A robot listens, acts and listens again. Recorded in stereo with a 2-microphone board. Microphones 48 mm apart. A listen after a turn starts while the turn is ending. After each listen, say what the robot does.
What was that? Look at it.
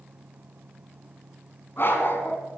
Turn 55° left.
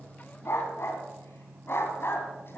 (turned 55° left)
Turn 55° left.
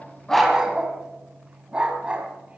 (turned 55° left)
Turn 25° right.
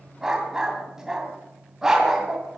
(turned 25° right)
Turn 10° right.
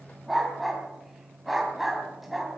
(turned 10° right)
Found it: a dog barking, straight ahead, 2 to 4 m away.